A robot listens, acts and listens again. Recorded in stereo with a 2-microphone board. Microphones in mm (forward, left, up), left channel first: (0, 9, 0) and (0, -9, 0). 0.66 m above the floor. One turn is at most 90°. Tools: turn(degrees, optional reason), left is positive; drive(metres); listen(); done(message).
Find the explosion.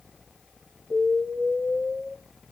turn(degrees=-55, reason="The explosion: about 55° right or 125° right.")
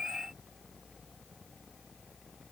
listen()
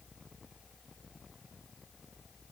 done("I heard an explosion, but can't make it out now. It was about straight ahead or 70° right.")